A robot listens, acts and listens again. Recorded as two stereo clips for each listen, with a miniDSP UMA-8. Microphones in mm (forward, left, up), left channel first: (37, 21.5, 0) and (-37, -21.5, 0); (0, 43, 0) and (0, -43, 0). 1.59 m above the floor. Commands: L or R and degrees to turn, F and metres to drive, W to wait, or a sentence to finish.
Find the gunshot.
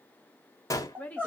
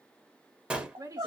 R15
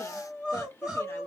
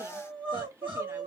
Facing where the gunshot came from. I can't hear it now.